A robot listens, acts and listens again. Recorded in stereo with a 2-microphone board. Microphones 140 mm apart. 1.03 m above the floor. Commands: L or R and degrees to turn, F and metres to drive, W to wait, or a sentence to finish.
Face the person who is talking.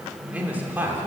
R30
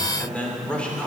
Found it: a man speaking, straight ahead.